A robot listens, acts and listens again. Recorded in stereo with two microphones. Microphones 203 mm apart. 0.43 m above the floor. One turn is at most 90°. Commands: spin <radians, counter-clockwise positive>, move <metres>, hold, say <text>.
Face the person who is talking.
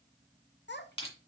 spin 0.96
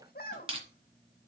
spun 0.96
spin 0.96
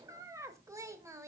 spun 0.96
spin -0.26
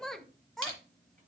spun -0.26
say Facing the child speaking.